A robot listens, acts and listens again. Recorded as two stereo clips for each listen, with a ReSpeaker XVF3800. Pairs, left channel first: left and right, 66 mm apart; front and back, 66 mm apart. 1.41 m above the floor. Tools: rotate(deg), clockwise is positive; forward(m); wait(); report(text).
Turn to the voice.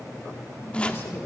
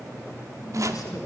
rotate(-35)
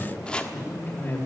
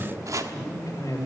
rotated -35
rotate(-35)
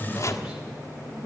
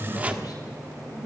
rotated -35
rotate(10)
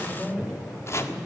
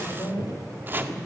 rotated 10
report("Facing the man speaking.")